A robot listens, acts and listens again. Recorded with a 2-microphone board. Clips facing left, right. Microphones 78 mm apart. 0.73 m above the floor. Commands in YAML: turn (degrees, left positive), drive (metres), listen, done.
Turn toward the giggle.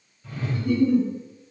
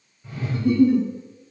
turn: -75
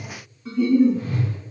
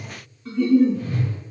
done: "Found it: a giggle, straight ahead."